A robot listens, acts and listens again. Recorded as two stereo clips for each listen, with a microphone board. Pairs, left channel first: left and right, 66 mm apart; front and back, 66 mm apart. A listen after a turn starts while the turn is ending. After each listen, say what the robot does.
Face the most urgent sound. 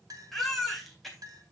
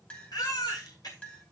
Facing the baby crying, 2 to 4 m away.